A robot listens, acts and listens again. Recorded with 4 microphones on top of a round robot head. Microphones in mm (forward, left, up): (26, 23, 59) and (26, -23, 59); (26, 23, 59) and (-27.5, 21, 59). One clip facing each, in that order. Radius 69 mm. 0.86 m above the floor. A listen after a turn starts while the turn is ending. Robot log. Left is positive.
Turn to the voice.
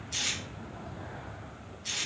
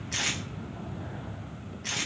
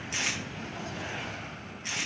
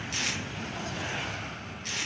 cmd idle
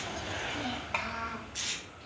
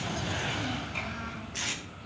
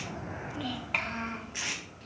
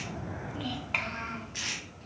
note: The child speaking: 95° left.
cmd yaw +95
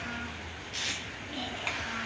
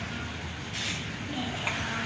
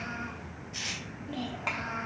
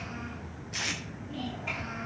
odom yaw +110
note: The child speaking is now 15° right.
cmd yaw -15
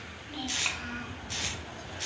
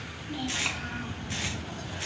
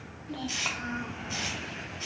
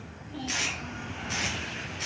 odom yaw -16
end: Found it: a child speaking, straight ahead.